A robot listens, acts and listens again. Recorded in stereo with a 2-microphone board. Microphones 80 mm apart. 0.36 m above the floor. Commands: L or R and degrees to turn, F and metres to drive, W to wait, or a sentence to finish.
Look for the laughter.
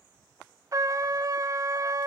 W
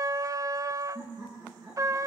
R50
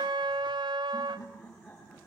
Facing the laughter, over 4 m away.